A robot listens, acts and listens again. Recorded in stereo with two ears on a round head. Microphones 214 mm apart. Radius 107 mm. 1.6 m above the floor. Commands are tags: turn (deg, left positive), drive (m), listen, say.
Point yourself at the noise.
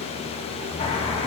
<turn deg="25"/>
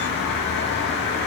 <turn deg="130"/>
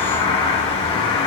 <turn deg="20"/>
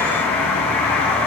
<say>Found it: a bird, straight ahead, 1 to 2 m away.</say>